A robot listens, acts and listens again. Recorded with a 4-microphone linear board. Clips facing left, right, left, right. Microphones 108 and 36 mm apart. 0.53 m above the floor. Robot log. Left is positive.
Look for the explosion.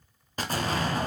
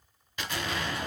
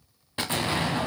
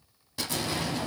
note: The explosion: about 40° left or 140° left.
cmd yaw +40
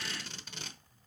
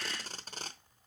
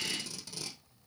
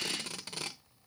cmd idle
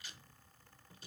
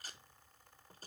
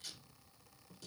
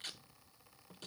end: I heard an explosion, but can't make it out now. It was about straight ahead or 100° left.